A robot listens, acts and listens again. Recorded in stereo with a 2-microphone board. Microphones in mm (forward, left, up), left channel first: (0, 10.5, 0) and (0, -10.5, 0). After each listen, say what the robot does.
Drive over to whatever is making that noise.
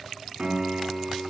Turn 65° right.
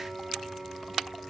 Turn 50° right.
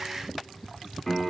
Turn 10° left.
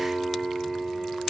Drive 1.0 m forward.
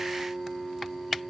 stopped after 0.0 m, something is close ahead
Turn 10° left.
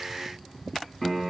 Something is in my way. I am facing the piano but have not reached it.